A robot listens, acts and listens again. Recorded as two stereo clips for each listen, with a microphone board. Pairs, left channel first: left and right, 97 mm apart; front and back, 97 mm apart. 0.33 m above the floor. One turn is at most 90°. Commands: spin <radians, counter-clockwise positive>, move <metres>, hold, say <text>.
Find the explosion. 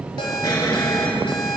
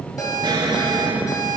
spin 1.57
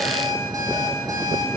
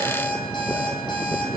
spin 0.87
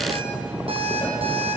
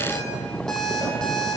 say I heard an explosion from this way, but can't make it out now.